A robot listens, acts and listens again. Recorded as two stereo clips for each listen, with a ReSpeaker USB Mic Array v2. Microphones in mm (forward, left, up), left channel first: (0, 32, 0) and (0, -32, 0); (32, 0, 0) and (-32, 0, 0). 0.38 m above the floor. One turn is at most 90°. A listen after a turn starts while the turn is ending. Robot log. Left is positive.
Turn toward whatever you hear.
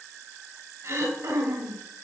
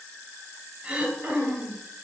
note: The throat clearing: 115° right.
cmd yaw -90
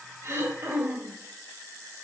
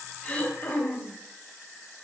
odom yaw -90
note: The throat clearing is now 45° right.
cmd yaw -45
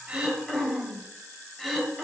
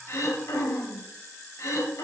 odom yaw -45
end: Found it: throat clearing, straight ahead.